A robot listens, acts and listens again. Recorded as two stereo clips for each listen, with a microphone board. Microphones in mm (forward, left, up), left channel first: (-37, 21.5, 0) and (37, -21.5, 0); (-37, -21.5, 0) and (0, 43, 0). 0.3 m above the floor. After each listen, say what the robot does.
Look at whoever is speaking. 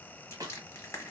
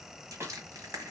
Keep listening.
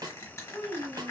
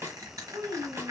Turn 55° left.
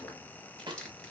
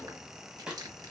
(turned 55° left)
Keep listening.
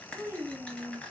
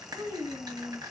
Turn 35° left.
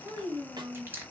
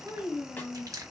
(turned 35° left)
Turn 10° right.
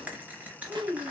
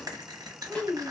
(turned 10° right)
Found it: a child speaking, straight ahead.